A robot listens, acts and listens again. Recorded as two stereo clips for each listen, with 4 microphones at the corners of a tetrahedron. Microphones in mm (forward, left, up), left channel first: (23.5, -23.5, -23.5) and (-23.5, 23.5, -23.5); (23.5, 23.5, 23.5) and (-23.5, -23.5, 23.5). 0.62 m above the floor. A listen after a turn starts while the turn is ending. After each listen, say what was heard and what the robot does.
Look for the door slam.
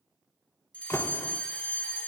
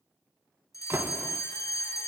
The door slam: 85° right. Turn 85° right.
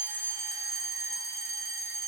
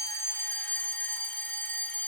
I heard a door slam from this way, but can't make it out now.